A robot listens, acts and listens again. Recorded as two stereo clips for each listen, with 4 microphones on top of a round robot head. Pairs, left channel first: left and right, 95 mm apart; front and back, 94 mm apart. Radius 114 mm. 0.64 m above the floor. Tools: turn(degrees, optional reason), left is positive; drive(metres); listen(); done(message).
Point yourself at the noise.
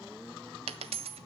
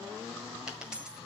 turn(degrees=-95, reason="The dropped coin: 95° right.")
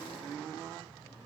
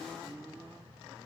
done("I heard a dropped coin from this way, but can't make it out now.")